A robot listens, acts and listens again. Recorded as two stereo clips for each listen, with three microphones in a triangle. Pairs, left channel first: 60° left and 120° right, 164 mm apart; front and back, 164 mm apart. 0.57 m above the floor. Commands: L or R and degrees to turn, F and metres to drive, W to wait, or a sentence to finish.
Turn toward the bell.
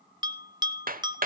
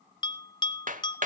R55
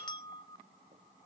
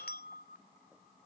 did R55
Facing the bell, under 1 m away.